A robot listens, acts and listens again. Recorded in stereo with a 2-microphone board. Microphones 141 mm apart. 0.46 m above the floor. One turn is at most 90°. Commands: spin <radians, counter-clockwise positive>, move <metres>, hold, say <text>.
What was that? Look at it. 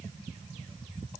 hold
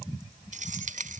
spin -1.22
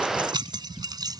spin -0.52
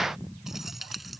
say Facing the keys jangling.